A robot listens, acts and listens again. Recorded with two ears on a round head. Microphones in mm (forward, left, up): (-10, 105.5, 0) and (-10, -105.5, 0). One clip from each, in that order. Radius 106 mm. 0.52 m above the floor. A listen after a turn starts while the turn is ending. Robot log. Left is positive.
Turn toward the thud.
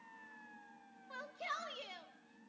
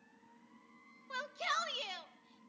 cmd idle
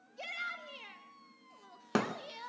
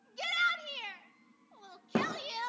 cmd yaw +90
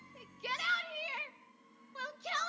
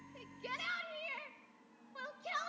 end: I heard a thud from this way, but can't make it out now.